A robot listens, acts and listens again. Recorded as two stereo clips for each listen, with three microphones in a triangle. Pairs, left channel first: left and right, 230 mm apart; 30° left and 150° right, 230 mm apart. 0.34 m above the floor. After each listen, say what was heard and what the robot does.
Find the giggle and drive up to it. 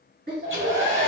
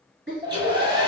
The giggle: 125° right. Turn 125° right.
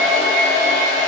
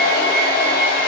Keep listening.
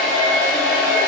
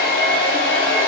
Keep listening.
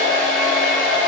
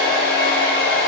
I heard a giggle from this way, but can't make it out now. I did not reach it.